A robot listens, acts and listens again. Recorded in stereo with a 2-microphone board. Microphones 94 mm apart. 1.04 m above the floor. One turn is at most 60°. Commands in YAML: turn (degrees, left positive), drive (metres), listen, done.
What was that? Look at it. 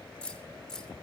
turn: 30
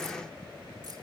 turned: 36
listen: true
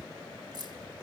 turn: -50
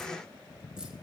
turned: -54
listen: true
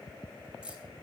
turn: -10
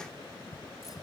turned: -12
listen: true
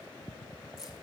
done: "Found it: keys jangling, straight ahead, 2 to 4 m away."